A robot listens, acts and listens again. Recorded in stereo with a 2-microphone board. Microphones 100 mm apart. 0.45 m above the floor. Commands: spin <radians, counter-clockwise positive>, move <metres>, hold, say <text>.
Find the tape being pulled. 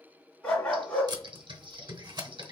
spin -0.79
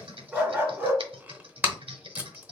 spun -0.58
spin -0.35
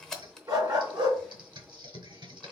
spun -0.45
say Found it: tape being pulled, straight ahead, under 1 m away.